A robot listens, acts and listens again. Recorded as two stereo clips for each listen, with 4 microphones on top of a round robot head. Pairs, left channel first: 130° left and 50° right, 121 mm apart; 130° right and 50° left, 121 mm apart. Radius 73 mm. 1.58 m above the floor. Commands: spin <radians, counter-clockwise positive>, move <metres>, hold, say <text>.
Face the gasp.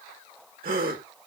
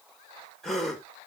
spin -0.79
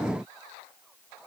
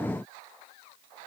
say Facing where the gasp came from. I can't hear it now.